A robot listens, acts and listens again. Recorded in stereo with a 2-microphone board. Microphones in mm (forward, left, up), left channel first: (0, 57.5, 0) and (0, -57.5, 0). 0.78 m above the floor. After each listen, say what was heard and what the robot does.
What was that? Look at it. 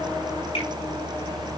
Keep listening.
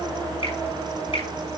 The finger snap: about 55° left or 125° left. Turn 55° left.
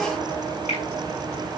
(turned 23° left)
So it is at 105° left. Turn 105° left.
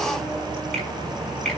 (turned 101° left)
Found it: a finger snap, straight ahead, over 4 m away.